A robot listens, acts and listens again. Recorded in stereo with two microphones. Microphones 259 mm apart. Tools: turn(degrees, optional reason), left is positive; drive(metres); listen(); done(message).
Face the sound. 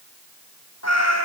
turn(degrees=70, reason="The cat meowing: about 70° left or 110° left.")
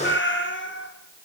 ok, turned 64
turn(degrees=40, reason="So it is at 40° left.")
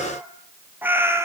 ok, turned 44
turn(degrees=-10, reason="The cat meowing is now 10° right.")
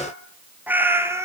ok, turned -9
turn(degrees=-10, reason="The cat meowing is now 10° right.")
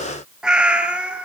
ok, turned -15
done("Facing the cat meowing, 2 to 4 m away.")